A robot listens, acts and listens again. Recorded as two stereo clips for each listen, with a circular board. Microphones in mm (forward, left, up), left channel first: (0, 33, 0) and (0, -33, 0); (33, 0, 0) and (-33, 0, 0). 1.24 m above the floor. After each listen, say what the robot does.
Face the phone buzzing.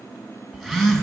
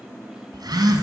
Turn 175° left.
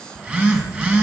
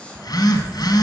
Turn 20° right.
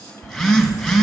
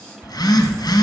Found it: a phone buzzing, straight ahead, 1 to 2 m away.